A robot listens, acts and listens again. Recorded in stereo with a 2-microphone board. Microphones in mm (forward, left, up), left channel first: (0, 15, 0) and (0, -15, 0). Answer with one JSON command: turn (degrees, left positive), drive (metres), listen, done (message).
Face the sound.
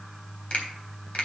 {"turn": 45}
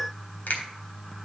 {"turn": 90}
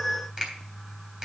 {"turn": -20}
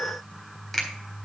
{"done": "Found it: a finger snap, straight ahead."}